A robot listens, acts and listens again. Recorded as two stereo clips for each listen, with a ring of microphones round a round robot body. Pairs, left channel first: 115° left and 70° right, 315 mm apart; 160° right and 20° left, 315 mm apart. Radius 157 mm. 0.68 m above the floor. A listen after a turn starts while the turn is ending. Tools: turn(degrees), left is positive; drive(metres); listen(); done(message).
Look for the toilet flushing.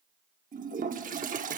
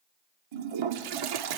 done("Facing the toilet flushing, under 1 m away.")